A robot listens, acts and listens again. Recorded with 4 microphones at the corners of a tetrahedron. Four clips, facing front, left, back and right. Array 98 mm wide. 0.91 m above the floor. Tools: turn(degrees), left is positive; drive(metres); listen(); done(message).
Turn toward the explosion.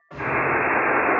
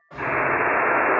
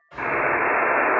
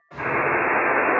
turn(degrees=20)
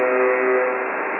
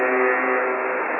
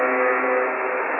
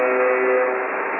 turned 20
done("I heard an explosion from this way, but can't make it out now.")